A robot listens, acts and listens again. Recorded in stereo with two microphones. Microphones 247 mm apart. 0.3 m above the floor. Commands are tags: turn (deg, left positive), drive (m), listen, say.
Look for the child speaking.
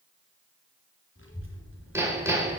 <turn deg="55"/>
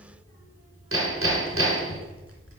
<turn deg="65"/>
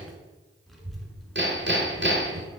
<say>Facing the child speaking.</say>